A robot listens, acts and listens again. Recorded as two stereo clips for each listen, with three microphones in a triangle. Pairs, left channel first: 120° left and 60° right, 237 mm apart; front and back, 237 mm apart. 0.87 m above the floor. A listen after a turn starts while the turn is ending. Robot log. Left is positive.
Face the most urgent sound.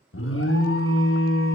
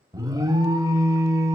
note: The alarm: 105° left.
cmd yaw +105
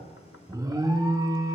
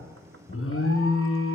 note: The alarm is now 15° left.
cmd yaw +15
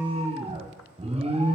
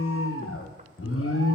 end: Facing the alarm.